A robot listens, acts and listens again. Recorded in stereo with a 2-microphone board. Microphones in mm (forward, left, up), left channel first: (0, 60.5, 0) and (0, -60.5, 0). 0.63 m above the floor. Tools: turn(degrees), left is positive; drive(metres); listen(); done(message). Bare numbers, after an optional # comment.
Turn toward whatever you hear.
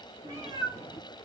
# The cat meowing: about 35° right or 145° right.
turn(-35)
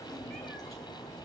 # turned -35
done("Facing the cat meowing, 1 to 2 m away.")